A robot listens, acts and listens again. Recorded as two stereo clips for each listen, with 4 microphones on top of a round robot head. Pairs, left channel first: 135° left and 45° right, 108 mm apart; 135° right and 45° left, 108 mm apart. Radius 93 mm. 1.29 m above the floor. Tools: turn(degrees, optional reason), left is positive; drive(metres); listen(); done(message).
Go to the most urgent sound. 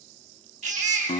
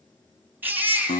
turn(degrees=-30, reason="The baby crying: 30° right.")
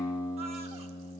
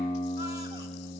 listen()
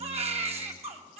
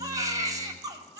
turn(degrees=-15, reason="The baby crying is now 15° right.")
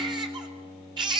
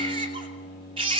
drive(metres=1.0)
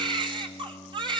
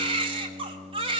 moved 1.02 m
drive(metres=1.0)
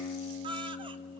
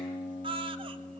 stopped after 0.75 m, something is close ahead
done("I am next to the baby crying.")